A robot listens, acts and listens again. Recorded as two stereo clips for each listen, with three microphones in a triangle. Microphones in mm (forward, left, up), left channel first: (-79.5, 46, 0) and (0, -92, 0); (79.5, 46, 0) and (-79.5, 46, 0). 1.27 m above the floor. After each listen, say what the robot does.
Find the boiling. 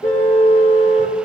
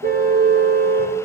Keep listening.
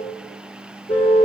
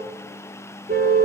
Keep listening.
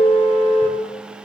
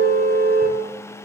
I can't make out boiling to turn to.